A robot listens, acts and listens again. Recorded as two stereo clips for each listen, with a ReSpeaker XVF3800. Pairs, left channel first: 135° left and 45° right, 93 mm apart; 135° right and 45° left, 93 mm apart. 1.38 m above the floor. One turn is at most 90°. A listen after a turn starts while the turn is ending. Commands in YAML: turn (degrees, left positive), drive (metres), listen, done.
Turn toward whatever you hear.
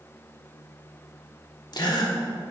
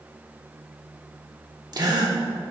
turn: 90
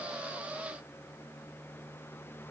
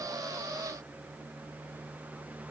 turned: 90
done: "I heard a gasp from this way, but can't make it out now."